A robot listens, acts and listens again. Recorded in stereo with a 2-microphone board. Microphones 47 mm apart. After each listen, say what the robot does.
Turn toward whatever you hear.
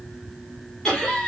Turn 20° left.
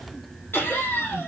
Turn 125° left.
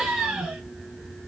Turn 10° right.
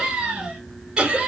Turn 15° right.
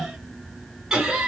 Turn 10° right.
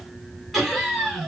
Found it: laughter, straight ahead, 2 to 4 m away.